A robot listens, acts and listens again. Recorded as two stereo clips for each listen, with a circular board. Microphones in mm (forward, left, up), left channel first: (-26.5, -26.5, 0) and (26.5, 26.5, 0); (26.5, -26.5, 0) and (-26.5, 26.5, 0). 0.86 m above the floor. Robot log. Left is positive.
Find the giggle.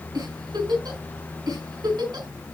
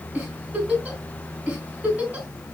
note: The giggle: 65° left.
cmd yaw +65
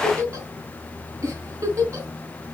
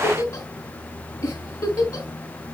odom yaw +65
end: Found it: a giggle, straight ahead, 2 to 4 m away.